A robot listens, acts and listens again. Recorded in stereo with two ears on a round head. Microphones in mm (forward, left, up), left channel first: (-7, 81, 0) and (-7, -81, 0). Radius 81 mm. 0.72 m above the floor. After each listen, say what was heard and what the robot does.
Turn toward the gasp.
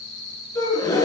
The gasp: about 20° left or 160° left. Turn 20° left.
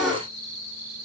Found it: a gasp, straight ahead, 2 to 4 m away.